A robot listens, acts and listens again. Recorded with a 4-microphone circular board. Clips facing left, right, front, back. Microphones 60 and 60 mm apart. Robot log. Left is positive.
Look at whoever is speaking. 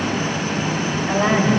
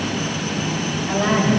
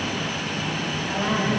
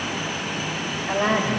note: The woman speaking: 145° left.
cmd yaw +145
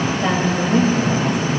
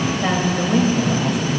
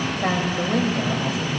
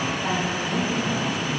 end: Facing the woman speaking.